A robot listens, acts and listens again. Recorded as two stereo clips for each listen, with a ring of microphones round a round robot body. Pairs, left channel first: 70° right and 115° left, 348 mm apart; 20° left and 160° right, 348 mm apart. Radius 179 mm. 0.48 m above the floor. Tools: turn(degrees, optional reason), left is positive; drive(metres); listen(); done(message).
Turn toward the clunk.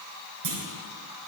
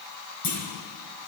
turn(degrees=70, reason="The clunk: 70° left.")
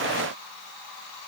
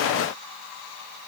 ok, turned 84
turn(degrees=-15, reason="Nothing new. It was at 15° right.")
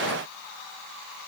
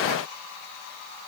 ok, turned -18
done("I heard a clunk from this way, but can't make it out now.")